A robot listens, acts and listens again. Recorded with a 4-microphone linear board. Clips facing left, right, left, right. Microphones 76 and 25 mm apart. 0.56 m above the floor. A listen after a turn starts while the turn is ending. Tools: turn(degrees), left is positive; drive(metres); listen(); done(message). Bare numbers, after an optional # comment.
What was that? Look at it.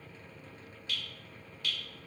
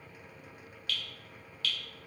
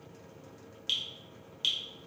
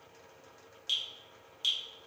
# The dripping: about 20° left or 160° left.
turn(20)
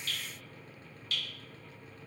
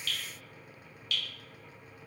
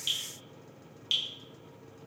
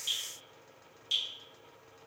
# So it is at 135° left.
turn(135)
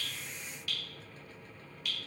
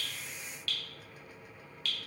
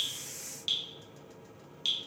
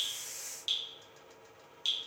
# The dripping is now 15° left.
turn(15)
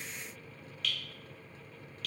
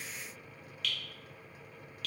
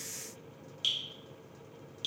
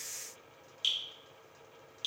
done("Facing the dripping.")